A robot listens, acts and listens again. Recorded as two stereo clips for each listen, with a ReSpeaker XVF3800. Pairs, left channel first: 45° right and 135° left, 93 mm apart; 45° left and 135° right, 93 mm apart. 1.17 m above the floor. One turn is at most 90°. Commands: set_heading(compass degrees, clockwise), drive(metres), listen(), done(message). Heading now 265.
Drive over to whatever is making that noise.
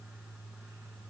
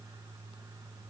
listen()
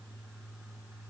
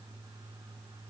listen()
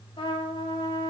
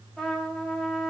set_heading(305)
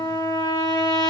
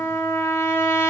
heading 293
set_heading(303)
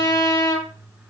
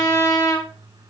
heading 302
drive(1.0)
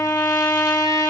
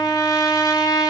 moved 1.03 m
drive(1.0)
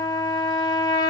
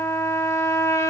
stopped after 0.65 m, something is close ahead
set_heading(312)
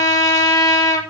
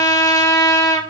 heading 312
done("Arrived at the trumpet, straight ahead.")